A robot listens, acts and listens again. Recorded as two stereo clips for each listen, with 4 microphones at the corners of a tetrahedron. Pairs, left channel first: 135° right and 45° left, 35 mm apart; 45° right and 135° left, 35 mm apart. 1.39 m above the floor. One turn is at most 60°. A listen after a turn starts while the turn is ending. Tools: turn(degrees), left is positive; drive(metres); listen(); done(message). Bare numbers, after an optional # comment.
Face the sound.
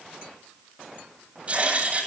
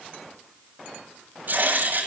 # The writing: 100° left.
turn(60)
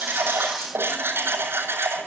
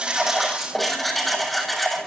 # The writing is now 45° left.
turn(45)
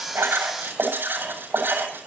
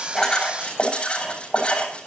# The writing is now 20° left.
turn(20)
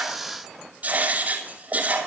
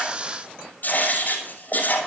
done("Facing the writing.")